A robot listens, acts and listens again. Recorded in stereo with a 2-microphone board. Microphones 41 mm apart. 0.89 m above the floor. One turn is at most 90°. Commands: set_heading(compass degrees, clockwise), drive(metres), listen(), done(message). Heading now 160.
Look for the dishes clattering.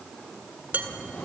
set_heading(200)
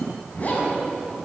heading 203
listen()
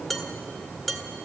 done("Facing the dishes clattering.")